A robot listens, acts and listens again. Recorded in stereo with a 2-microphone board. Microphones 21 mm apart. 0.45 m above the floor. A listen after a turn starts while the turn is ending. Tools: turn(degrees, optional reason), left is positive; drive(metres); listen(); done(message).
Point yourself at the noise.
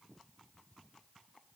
listen()
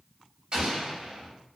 turn(degrees=-40, reason="The explosion: about 40° right or 140° right.")
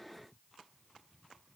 listen()
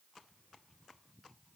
done("I heard an explosion, but can't make it out now. It was about straight ahead or 100° right.")